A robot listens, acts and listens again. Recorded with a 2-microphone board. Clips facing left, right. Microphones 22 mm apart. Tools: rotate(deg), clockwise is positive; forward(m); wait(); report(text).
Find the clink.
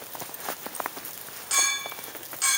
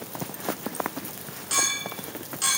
rotate(-30)
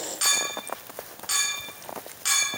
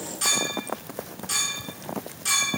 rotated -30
rotate(-145)
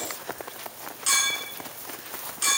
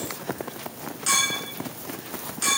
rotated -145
report("Found it: a clink, straight ahead, under 1 m away.")